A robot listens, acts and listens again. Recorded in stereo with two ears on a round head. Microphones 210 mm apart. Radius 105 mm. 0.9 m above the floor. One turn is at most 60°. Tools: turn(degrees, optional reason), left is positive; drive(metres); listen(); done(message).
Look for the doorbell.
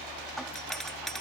turn(degrees=30)
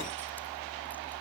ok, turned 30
listen()
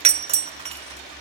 turn(degrees=-30, reason="So it is at 30° right.")
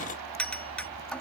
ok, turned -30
done("Found it: a doorbell, straight ahead.")